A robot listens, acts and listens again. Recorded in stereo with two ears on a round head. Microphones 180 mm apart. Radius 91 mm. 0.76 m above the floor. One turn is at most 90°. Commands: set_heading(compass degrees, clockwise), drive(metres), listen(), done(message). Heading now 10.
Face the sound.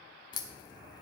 set_heading(350)
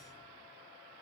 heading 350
listen()
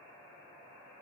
done("I heard a crack, but can't make it out now. It was about straight ahead or 140° left.")